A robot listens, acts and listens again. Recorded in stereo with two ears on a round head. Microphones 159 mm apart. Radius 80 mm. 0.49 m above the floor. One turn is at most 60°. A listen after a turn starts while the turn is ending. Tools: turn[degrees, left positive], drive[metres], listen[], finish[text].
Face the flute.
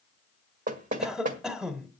Action: listen[]
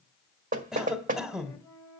Thought: The flute: about 20° left or 160° left.
Action: turn[20]
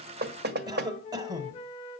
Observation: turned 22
Thought: So it is at 135° left.
Action: turn[60]
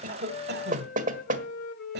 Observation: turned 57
Thought: The flute is now 80° left.
Action: turn[60]
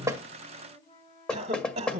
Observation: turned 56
Thought: The flute is now 25° left.
Action: turn[25]
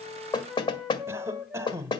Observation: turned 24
Action: finish[Found it: a flute, straight ahead.]